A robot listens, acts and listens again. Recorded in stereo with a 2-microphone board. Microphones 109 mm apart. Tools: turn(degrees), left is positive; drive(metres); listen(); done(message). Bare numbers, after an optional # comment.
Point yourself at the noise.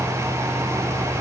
listen()
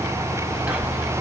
turn(-30)
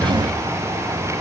listen()
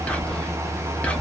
# So it is at 15° left.
turn(15)
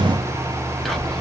done("Found it: whispering, straight ahead.")